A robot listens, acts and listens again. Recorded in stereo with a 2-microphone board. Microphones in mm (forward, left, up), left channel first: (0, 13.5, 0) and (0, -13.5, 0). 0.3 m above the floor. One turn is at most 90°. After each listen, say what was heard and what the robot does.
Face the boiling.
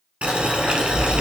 The boiling: about 50° right or 130° right. Turn 50° right.
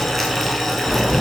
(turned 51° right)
Found it: boiling, straight ahead.